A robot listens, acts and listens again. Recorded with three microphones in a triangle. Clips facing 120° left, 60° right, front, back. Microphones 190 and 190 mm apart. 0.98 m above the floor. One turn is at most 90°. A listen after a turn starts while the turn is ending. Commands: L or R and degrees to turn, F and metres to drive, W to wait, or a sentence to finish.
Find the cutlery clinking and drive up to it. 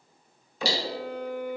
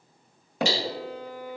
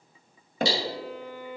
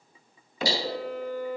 L65
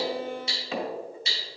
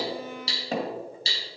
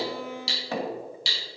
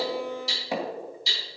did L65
F1.0
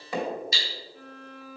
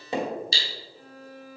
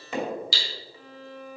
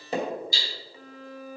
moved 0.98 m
F1.0
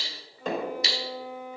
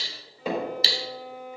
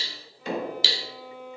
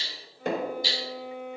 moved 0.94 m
F1.0
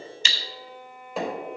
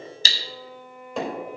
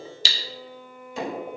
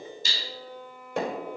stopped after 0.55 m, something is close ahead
I am next to the cutlery clinking.